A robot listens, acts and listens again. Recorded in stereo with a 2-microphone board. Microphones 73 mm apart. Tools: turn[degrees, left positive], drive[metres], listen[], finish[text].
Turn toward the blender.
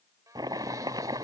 Thought: The blender: about 55° right or 125° right.
Action: turn[-55]
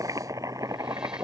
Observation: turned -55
Action: listen[]
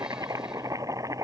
Action: listen[]
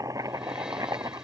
Action: finish[I heard a blender, but can't make it out now. It was about straight ahead or 70° right.]